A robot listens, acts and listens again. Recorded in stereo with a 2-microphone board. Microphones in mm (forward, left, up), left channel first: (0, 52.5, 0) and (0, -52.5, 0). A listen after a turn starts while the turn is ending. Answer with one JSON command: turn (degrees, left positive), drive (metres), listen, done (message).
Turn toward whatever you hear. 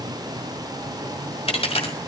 {"turn": 90}
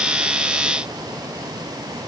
{"done": "I heard a dropped coin from this way, but can't make it out now."}